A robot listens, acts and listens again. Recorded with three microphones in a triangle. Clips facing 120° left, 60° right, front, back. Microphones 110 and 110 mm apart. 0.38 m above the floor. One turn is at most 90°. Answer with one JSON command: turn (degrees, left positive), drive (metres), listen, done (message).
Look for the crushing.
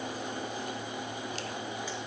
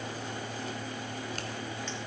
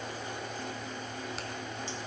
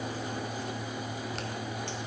{"listen": true}
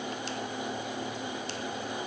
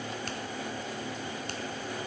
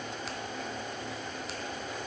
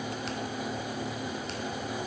{"listen": true}
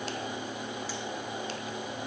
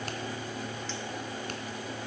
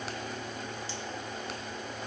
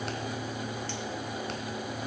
{"done": "I can't make out crushing to turn to."}